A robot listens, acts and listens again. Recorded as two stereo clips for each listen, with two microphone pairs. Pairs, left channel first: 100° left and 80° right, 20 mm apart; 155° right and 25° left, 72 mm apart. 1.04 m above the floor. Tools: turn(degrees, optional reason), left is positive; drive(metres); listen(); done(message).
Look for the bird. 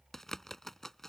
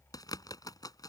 turn(degrees=170, reason="The bird: 170° left.")
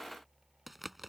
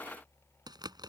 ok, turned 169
done("Facing the bird.")